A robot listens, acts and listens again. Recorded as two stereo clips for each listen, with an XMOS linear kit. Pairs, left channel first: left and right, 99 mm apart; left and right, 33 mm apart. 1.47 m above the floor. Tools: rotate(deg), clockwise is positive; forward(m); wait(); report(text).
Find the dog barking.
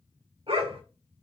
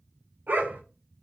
rotate(70)
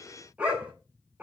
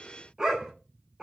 rotate(15)
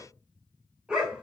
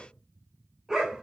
rotate(10)
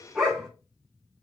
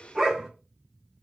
report("Found it: a dog barking, straight ahead.")